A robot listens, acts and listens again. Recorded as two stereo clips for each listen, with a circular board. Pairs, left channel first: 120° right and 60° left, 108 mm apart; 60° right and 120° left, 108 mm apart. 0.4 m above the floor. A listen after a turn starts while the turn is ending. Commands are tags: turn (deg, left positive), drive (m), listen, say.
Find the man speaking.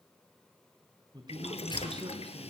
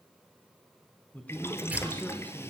<turn deg="15"/>
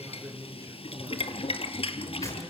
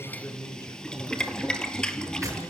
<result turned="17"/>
<say>Found it: a man speaking, straight ahead.</say>